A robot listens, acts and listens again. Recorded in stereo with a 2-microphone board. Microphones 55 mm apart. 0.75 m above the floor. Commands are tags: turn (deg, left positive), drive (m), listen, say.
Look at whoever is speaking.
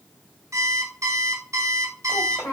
<turn deg="90"/>
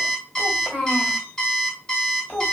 <say>Facing the child speaking, 1 to 2 m away.</say>